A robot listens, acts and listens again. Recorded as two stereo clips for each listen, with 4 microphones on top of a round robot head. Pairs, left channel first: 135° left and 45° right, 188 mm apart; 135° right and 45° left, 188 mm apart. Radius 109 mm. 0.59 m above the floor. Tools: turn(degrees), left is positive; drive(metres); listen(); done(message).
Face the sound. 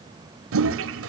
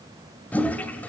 turn(degrees=-50)
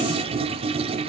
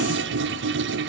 turn(degrees=15)
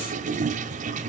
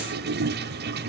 turn(degrees=10)
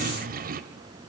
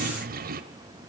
done("Found it: a toilet flushing, straight ahead, 1 to 2 m away.")